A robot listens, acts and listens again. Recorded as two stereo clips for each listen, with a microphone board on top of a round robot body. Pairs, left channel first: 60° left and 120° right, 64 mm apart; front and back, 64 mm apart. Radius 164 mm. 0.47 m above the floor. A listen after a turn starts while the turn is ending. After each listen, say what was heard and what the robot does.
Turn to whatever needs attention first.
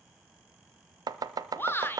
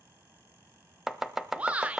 The shout: 110° left. Turn 110° left.
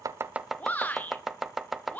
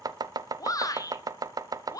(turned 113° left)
Facing the shout, 2 to 4 m away.